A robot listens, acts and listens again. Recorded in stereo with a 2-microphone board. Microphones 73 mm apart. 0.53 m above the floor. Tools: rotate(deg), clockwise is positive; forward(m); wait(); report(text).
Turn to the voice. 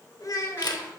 rotate(-50)
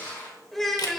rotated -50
report("Found it: a child speaking, straight ahead, 1 to 2 m away.")